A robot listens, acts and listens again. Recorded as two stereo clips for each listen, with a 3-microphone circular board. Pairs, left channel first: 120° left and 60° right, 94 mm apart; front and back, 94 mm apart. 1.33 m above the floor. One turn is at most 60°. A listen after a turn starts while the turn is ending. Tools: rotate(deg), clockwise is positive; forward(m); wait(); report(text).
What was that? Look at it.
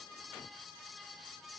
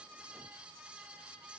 wait()
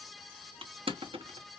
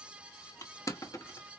rotate(55)
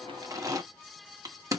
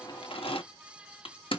report("Facing the crushing.")